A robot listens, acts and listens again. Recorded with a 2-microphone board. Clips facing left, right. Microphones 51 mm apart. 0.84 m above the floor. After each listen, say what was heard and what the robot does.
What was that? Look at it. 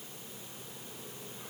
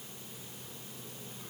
Keep listening.
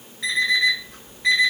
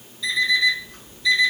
The alarm clock: about 55° left or 125° left. Turn 55° left.
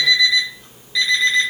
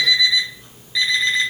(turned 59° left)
Facing the alarm clock, 1 to 2 m away.